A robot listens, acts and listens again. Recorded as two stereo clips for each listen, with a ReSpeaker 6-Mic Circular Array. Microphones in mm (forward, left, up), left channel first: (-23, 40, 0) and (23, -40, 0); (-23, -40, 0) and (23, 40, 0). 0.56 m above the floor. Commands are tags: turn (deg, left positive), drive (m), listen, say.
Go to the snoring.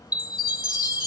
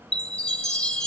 <listen/>
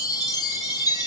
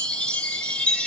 <listen/>
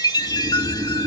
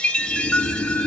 <turn deg="-55"/>
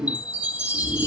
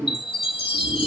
<turn deg="10"/>
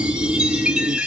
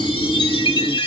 <drive m="1.0"/>
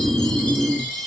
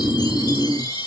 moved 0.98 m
<drive m="1.0"/>
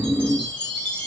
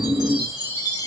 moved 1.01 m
<drive m="1.0"/>
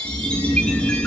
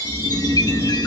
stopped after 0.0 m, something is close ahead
<say>Arrived at the snoring, straight ahead.</say>